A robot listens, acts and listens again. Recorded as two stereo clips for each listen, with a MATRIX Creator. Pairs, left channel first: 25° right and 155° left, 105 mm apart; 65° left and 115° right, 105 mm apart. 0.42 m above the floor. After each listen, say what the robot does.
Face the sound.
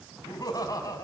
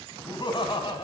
Turn 35° left.
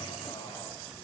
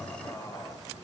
Keep listening.
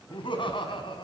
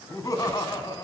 Turn 15° left.
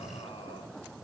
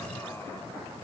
Keep listening.
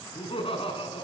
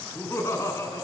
Found it: laughter, straight ahead.